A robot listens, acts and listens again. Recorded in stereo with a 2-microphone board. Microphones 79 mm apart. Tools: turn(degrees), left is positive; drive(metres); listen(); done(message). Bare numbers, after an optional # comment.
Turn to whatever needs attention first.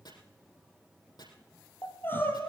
# The crying: about 25° left or 155° left.
turn(25)
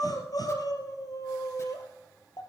# So it is at 125° left.
turn(125)
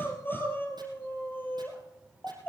# The crying is now 25° left.
turn(25)
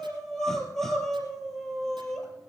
done("Facing the crying.")